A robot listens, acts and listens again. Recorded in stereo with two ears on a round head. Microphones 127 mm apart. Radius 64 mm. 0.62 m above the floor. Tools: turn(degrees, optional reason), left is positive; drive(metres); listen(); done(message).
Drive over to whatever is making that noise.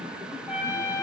turn(degrees=-20, reason="The trumpet: about 20° right or 160° right.")
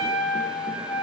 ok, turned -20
drive(metres=1.0)
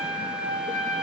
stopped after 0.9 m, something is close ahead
turn(degrees=-10, reason="The trumpet is now 10° right.")
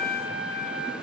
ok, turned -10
done("I am next to the trumpet.")